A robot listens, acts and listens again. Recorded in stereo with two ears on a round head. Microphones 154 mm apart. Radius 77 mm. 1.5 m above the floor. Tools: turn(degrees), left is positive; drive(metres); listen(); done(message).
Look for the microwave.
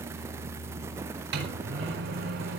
turn(degrees=-70)
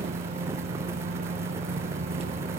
turn(degrees=-35)
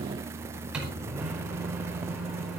done("Facing the microwave, over 4 m away.")